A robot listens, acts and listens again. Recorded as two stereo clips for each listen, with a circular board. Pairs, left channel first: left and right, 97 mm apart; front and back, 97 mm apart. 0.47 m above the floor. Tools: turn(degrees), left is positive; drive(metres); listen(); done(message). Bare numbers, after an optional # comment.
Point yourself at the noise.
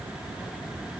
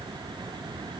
listen()
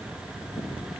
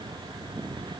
listen()
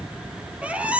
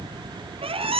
# The squeak: 165° right.
turn(-165)
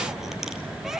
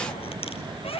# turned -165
done("Facing the squeak.")